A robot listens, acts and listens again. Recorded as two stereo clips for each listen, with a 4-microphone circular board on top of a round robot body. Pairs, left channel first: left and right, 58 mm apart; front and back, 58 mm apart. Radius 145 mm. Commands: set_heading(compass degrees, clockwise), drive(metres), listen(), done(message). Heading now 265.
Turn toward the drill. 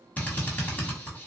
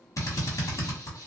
set_heading(240)
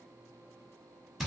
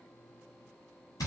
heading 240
done("Found it: a drill, straight ahead, 1 to 2 m away.")